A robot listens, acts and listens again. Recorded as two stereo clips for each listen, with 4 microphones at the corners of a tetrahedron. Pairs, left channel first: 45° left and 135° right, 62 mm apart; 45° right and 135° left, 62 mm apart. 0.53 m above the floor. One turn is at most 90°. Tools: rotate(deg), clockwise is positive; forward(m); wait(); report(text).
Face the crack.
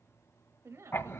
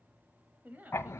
wait()
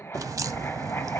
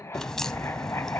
rotate(90)
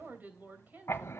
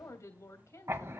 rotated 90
rotate(35)
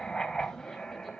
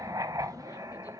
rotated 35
report("Facing where the crack came from. I can't hear it now.")